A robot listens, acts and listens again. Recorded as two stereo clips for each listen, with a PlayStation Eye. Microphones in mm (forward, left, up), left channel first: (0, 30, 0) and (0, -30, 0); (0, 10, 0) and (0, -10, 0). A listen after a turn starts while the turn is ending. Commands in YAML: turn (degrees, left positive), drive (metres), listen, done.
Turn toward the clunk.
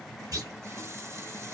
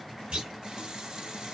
turn: -70
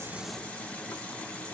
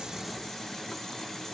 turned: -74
listen: true
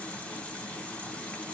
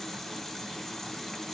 done: "I heard a clunk, but can't make it out now. It was about 5° left or 35° right."